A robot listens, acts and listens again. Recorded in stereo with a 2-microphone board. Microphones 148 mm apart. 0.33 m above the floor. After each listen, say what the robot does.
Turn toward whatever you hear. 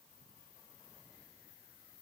Keep listening.
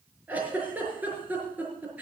Turn 30° right.
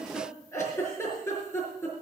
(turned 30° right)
Turn 20° left.
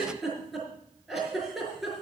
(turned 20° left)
Facing the giggle, over 4 m away.